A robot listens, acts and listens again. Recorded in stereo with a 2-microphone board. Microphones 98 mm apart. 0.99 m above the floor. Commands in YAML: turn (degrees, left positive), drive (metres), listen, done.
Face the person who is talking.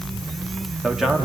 turn: -30
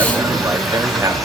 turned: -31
listen: true
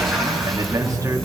turn: -145
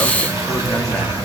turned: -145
listen: true
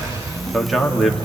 done: "Found it: a man speaking, straight ahead, 2 to 4 m away."